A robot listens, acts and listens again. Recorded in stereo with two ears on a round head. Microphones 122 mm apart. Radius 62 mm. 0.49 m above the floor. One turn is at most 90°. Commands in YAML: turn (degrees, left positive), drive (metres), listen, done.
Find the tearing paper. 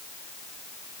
listen: true
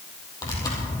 turn: 30
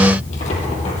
turn: 90
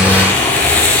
turn: 10
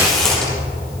done: "Facing the tearing paper."